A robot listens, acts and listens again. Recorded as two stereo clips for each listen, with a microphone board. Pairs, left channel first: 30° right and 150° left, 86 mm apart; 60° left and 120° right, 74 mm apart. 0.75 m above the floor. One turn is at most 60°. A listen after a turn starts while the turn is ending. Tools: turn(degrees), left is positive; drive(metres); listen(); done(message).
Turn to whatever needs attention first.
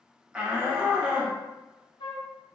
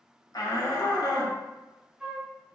turn(degrees=60)
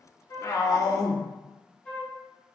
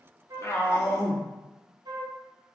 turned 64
turn(degrees=10)
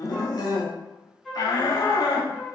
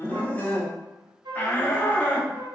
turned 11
done("Facing the shout, under 1 m away.")